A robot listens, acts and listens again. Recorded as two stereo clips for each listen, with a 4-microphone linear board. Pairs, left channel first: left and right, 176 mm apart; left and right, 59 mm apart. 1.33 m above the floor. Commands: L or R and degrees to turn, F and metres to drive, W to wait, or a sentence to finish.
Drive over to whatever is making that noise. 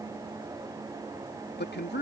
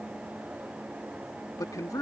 L75
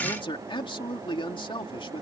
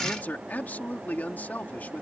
L25
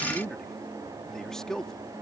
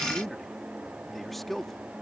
F1.0
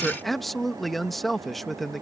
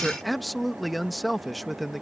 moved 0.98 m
F1.0
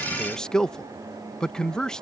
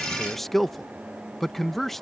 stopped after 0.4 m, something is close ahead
Arrived at the man speaking, straight ahead.